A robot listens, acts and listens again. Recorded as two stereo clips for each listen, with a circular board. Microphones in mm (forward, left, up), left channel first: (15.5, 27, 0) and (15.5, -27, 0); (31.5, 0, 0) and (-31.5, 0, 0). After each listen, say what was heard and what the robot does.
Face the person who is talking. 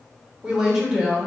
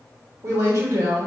The woman speaking: 165° right. Turn 165° right.
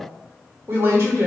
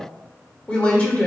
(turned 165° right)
The woman speaking is now 65° right. Turn 65° right.
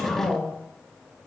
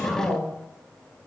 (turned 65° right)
The woman speaking is now 20° left. Turn 20° left.
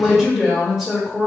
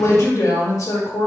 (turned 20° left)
Facing the woman speaking, 1 to 2 m away.